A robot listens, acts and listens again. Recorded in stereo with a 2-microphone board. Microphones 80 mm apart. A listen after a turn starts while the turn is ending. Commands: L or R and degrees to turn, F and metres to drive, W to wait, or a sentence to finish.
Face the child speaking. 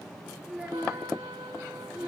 R30
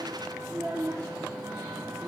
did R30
R15
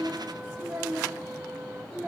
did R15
R160
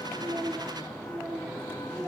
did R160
R20
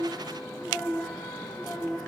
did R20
Facing the child speaking.